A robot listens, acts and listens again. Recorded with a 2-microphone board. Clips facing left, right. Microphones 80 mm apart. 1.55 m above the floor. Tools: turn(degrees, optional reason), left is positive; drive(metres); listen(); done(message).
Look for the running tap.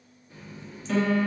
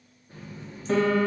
turn(degrees=-45, reason="The running tap: about 45° right or 135° right.")
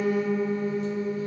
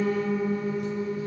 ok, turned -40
listen()
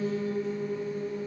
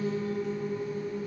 listen()
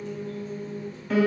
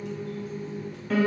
turn(degrees=-85, reason="So it is at 85° right.")
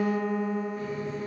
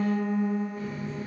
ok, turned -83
done("Facing the running tap.")